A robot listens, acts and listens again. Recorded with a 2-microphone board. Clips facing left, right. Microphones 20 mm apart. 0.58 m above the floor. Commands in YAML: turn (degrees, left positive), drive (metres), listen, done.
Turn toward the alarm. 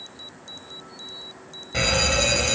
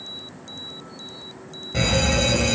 turn: 15
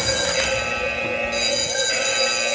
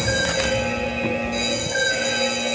turn: 150
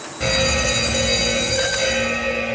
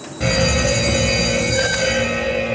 turn: 10
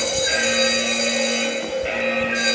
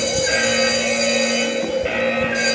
done: "Facing the alarm."